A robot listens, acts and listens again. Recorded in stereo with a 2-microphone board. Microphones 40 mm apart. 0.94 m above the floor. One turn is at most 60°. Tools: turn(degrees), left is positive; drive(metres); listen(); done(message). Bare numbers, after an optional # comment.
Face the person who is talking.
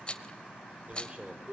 # The man speaking: about 30° right or 150° right.
turn(-30)
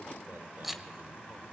# So it is at 120° right.
turn(-60)
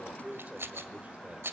# The man speaking is now 35° right.
turn(-35)
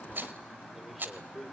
done("Found it: a man speaking, straight ahead, 2 to 4 m away.")